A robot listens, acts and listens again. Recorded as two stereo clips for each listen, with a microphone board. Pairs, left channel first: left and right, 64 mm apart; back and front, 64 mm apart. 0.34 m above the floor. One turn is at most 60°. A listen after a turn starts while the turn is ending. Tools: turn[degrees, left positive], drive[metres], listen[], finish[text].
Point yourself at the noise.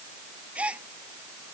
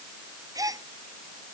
Thought: The gasp: 20° right.
Action: turn[-20]
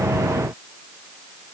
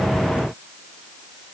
Action: finish[Facing where the gasp came from. I can't hear it now.]